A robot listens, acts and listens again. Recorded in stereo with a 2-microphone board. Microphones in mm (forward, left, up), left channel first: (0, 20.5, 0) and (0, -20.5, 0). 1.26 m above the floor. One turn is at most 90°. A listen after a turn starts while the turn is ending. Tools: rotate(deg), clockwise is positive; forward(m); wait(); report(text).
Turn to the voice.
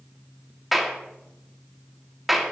wait()
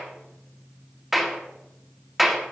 wait()
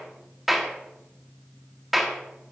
report("I can't make out anyone speaking to turn to.")